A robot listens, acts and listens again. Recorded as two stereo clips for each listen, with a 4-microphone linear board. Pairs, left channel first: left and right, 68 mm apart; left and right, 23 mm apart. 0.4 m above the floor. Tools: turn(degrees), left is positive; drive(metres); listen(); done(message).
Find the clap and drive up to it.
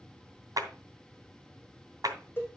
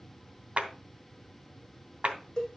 turn(degrees=-60)
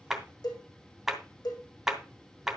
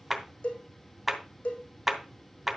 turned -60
drive(metres=1.0)
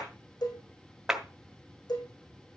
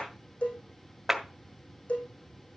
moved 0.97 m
turn(degrees=-10)
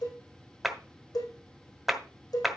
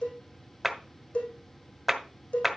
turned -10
drive(metres=1.0)
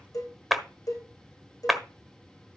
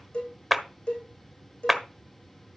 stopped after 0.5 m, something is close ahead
done("Arrived at the clap, straight ahead.")